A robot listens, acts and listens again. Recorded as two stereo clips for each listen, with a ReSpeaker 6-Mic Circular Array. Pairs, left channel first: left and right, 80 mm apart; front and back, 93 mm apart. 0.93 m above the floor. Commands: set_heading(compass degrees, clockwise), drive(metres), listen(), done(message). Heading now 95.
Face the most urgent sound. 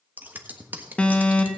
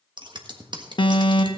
set_heading(80)
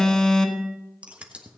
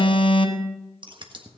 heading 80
done("Found it: an alarm, straight ahead.")